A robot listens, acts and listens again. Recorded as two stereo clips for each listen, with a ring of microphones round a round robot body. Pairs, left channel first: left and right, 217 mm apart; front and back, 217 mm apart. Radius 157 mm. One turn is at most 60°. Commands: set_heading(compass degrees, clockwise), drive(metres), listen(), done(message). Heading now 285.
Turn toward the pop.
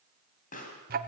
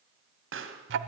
set_heading(225)
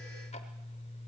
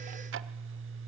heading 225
set_heading(165)
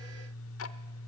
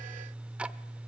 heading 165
set_heading(130)
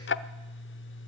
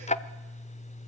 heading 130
done("I heard a pop from this way, but can't make it out now.")